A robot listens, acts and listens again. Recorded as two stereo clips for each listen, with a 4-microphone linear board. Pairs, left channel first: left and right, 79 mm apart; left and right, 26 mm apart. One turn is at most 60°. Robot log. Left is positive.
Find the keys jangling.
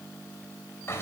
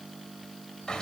cmd idle
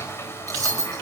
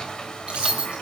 note: The keys jangling: about 45° right or 135° right.
cmd yaw -45
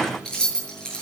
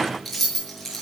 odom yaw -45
note: So it is at 10° left.
cmd yaw +10
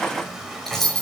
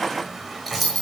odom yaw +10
end: Found it: keys jangling, straight ahead.